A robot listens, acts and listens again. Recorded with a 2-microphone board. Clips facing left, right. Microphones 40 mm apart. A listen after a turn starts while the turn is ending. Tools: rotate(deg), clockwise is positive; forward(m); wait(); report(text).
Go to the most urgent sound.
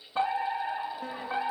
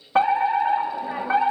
rotate(70)
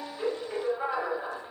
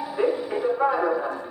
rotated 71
rotate(25)
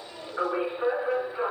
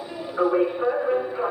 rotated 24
forward(1.0)
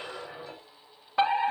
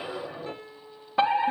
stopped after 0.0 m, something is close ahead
report("Blocked. The fire alarm is further on, straight ahead.")